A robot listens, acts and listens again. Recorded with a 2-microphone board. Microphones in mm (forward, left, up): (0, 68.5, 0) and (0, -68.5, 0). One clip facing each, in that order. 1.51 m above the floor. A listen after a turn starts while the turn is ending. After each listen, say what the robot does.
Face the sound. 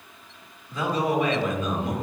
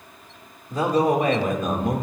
Turn 55° right.
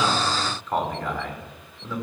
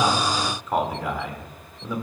Turn 15° right.
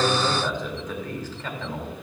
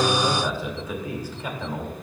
Turn 15° right.
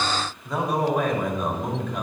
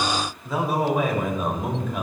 Found it: a man speaking, straight ahead, 2 to 4 m away.